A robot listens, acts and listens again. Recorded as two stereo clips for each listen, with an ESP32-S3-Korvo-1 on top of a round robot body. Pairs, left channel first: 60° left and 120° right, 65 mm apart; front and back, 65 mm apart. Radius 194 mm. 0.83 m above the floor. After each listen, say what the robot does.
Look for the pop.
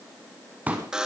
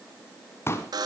Turn 50° right.
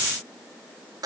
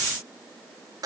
Facing where the pop came from. I can't hear it now.